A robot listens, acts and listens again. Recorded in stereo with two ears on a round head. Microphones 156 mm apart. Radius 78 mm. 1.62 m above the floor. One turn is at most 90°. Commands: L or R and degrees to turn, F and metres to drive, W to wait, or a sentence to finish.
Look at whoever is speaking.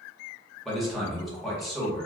L30
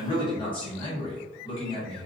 L90
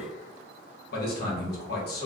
L75
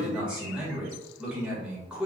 Found it: a man speaking, straight ahead.